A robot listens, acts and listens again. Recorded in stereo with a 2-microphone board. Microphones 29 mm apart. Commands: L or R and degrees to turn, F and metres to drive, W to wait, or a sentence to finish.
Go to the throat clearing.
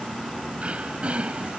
R45
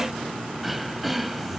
F1.0
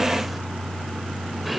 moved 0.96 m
F1.0
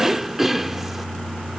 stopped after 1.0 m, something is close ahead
R15
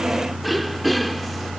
Arrived at the throat clearing, straight ahead.